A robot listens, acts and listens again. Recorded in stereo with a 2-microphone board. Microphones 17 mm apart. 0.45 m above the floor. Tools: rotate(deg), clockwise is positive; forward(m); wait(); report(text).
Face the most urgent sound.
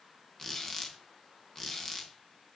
wait()
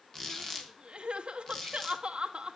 rotate(70)
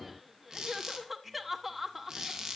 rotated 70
report("Found it: crying, straight ahead.")